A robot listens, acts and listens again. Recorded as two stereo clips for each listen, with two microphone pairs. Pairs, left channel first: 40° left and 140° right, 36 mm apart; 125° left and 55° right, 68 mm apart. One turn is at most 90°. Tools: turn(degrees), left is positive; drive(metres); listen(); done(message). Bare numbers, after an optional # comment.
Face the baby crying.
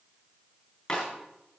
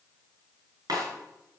listen()
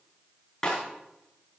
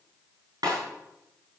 listen()
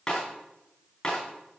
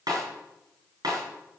done("I can't make out a baby crying to turn to.")